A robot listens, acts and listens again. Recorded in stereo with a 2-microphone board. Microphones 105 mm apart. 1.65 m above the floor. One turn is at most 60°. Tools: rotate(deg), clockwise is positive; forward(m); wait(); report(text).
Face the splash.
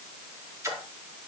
rotate(30)
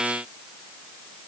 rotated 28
wait()
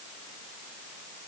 report("I heard a splash, but can't make it out now. It was about straight ahead or 125° right.")